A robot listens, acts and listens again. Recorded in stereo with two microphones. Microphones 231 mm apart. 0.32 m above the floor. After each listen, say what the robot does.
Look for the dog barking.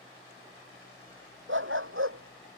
Turn 65° right.
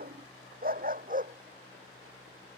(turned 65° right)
Turn 35° right.
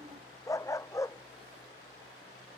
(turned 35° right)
Turn 15° left.
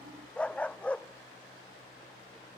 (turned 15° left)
Found it: a dog barking, straight ahead.